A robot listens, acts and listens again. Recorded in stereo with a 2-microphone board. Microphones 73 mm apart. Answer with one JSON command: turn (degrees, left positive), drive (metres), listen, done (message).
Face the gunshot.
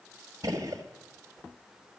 {"turn": -60}
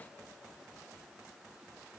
{"listen": true}
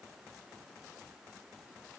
{"done": "I heard a gunshot, but can't make it out now. It was about straight ahead or 60° right."}